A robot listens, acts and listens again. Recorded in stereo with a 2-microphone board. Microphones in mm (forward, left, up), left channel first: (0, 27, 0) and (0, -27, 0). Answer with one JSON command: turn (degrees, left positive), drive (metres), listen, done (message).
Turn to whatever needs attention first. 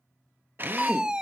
{"turn": -15}
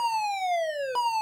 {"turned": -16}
{"done": "Found it: a fire alarm, straight ahead, 1 to 2 m away."}